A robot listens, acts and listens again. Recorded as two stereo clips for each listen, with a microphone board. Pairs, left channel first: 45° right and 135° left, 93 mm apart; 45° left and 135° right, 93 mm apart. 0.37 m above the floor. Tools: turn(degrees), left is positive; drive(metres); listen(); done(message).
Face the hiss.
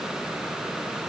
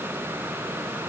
listen()
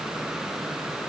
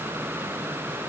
listen()
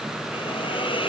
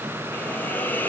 turn(degrees=-25)
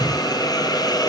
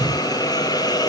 done("Facing the hiss.")